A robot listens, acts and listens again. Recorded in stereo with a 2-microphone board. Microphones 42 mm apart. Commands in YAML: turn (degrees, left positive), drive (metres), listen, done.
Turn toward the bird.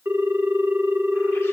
listen: true
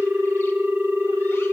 listen: true
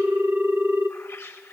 turn: 90
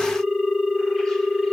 listen: true
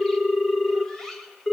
turn: 10
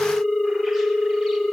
listen: true
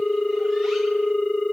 listen: true
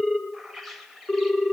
done: "Found it: a bird, straight ahead."